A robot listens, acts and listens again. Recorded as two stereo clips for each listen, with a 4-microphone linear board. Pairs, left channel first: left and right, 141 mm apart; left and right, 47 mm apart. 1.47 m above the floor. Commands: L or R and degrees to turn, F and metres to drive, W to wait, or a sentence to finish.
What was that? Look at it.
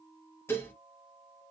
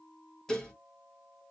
L15
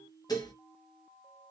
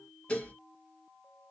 L155
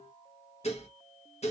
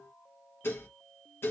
L60
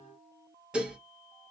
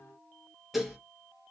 R10
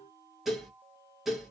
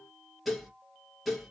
Facing the dishes clattering, under 1 m away.